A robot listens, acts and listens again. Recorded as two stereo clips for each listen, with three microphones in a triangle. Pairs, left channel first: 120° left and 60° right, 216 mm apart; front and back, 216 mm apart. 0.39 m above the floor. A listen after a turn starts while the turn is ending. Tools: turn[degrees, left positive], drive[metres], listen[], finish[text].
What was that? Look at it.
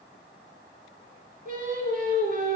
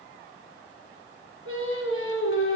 Thought: The singing: 10° right.
Action: turn[-10]
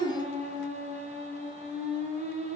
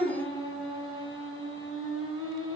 Action: finish[Facing the singing, 2 to 4 m away.]